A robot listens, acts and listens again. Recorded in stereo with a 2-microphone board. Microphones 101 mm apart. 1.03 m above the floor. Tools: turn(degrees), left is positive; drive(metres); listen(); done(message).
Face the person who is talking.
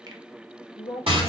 turn(degrees=55)
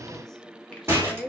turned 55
done("Facing the woman speaking.")